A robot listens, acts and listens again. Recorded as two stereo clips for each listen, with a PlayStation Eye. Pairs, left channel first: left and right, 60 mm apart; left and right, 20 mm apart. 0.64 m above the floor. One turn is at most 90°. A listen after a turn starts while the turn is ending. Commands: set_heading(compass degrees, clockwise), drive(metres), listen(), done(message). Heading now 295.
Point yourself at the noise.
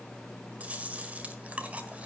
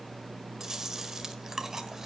set_heading(320)
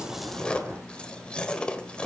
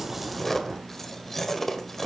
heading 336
set_heading(321)
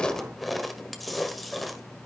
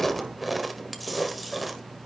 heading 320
done("Found it: chewing, straight ahead.")